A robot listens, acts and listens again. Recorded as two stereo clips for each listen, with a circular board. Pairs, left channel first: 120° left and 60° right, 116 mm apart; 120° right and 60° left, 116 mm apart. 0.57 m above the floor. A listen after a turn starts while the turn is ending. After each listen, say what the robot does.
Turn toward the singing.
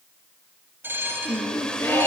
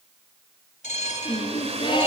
Turn 170° right.
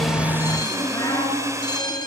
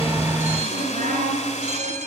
Turn 60° left.
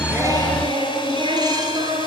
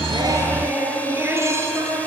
Turn 10° right.
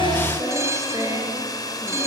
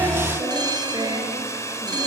Facing the singing.